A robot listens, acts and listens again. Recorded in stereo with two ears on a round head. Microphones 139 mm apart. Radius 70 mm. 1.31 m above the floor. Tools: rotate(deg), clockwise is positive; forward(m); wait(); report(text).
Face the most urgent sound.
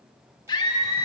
rotate(-25)
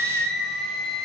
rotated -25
report("Facing the scream, 1 to 2 m away.")